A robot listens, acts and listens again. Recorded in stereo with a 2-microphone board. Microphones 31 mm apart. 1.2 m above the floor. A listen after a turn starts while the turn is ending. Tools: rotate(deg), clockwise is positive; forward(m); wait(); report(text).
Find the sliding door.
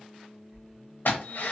rotate(25)
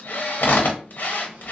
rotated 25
wait()
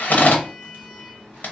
report("Facing the sliding door, 1 to 2 m away.")